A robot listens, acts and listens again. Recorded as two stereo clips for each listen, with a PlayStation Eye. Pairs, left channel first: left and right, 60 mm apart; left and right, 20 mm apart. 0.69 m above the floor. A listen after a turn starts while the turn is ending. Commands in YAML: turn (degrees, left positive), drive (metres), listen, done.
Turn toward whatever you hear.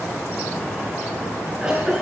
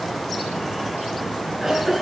turn: -30
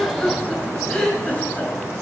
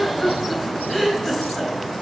turn: 15
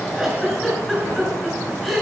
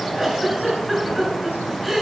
done: "Found it: a giggle, straight ahead."